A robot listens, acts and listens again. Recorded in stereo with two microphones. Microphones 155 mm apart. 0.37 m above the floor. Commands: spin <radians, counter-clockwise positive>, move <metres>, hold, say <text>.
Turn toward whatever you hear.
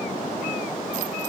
hold
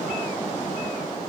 hold
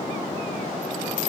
say I can't make out anything.